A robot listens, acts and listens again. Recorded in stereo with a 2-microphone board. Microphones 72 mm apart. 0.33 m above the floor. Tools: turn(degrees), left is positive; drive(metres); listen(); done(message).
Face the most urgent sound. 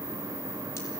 listen()
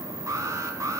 turn(degrees=-45)
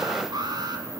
turn(degrees=-85)
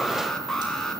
done("Facing the alarm.")